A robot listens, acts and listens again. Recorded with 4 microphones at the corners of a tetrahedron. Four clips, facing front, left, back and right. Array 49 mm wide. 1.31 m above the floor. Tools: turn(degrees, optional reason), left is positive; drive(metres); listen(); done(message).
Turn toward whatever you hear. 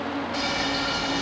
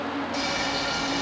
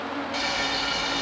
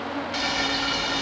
turn(degrees=-120, reason="The frying: 120° right.")
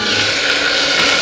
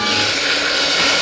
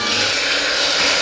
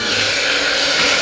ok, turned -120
turn(degrees=-20, reason="The frying is now 20° right.")
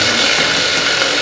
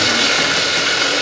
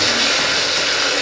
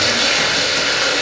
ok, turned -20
done("Facing the frying.")